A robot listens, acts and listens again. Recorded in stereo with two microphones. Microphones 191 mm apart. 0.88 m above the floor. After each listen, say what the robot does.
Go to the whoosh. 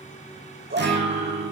Keep listening.
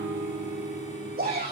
Keep listening.
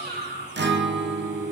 I can't make out a whoosh to turn to.